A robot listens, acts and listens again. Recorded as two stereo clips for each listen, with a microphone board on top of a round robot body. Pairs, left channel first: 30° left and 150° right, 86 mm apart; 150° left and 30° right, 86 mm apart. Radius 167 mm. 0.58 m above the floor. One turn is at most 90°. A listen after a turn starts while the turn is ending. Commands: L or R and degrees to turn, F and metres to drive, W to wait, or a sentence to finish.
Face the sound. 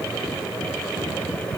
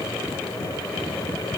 W
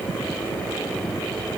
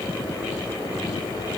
W
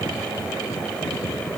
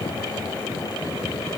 I can't make out anything.